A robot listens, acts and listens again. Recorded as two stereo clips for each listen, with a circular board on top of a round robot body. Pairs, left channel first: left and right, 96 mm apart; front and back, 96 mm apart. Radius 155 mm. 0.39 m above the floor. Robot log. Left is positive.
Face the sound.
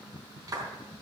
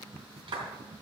note: The clap: 140° right.
cmd yaw -140
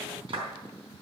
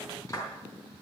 note: The clap is now 55° right.
cmd yaw -55
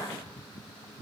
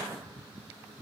cmd idle
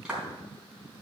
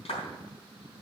note: The clap is now 10° right.
cmd yaw -10
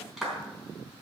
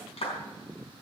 end: Facing the clap.